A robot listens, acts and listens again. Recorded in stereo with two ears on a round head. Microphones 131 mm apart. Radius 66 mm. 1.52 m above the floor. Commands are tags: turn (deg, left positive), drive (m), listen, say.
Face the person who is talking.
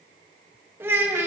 <turn deg="-30"/>
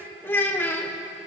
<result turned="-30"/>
<turn deg="15"/>
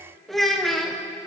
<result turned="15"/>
<say>Facing the child speaking.</say>